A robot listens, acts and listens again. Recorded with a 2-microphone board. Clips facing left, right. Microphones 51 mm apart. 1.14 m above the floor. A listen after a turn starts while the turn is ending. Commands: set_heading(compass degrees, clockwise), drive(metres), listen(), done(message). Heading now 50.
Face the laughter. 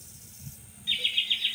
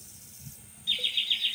set_heading(25)
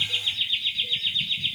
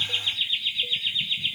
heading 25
set_heading(40)
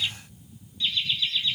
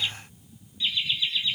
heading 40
set_heading(55)
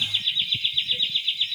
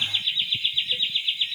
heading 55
set_heading(75)
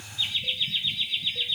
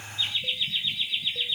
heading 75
done("Found it: laughter, straight ahead, 2 to 4 m away.")